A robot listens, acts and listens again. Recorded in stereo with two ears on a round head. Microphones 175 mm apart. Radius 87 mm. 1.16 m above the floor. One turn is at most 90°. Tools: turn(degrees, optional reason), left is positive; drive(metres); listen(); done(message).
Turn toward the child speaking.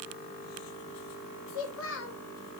turn(degrees=70, reason="The child speaking: about 70° left or 110° left.")
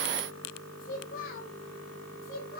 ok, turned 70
turn(degrees=45, reason="So it is at 45° left.")
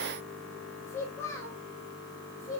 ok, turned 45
turn(degrees=15, reason="The child speaking is now 15° left.")
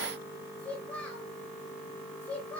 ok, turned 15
done("Found it: a child speaking, straight ahead.")